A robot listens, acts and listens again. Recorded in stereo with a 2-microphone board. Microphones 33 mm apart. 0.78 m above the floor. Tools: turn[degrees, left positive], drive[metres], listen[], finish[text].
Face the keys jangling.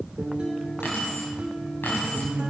Action: turn[90]
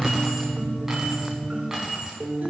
Thought: So it is at 20° right.
Action: turn[-20]
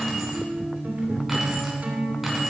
Action: finish[Facing the keys jangling, over 4 m away.]